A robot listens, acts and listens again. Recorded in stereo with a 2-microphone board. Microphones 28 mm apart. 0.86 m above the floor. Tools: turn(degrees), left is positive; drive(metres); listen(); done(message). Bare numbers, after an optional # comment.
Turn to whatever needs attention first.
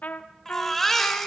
turn(30)
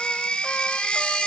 # So it is at 140° left.
turn(140)
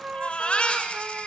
# The baby crying is now 40° left.
turn(40)
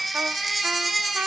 done("Found it: a baby crying, straight ahead, 2 to 4 m away.")